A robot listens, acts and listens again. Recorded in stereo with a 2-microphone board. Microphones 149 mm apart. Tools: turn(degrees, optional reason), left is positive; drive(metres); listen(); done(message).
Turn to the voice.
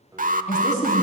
turn(degrees=50, reason="The woman speaking: about 50° left or 130° left.")
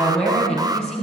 done("Found it: a woman speaking, straight ahead.")